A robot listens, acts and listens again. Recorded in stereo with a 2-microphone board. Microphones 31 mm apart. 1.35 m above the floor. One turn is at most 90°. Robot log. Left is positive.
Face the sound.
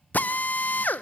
note: The drill: about 70° left or 110° left.
cmd yaw +70
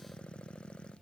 cmd idle
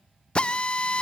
note: So it is at 35° left.
cmd yaw +35
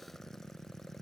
cmd idle
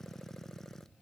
cmd idle
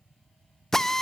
note: The drill is now 15° left.
cmd yaw +15
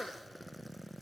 end: Found it: a drill, straight ahead, under 1 m away.